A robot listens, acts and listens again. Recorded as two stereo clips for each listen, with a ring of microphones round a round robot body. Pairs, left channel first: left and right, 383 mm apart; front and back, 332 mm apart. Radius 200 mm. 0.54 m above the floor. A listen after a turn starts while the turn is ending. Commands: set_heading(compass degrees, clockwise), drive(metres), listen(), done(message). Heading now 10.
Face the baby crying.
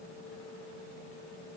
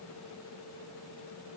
listen()
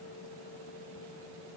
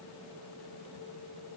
listen()
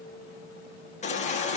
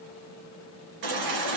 set_heading(205)
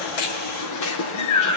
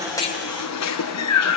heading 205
set_heading(165)
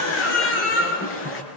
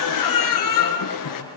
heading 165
set_heading(135)
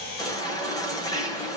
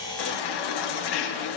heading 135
set_heading(125)
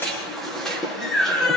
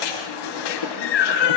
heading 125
done("Found it: a baby crying, straight ahead, over 4 m away.")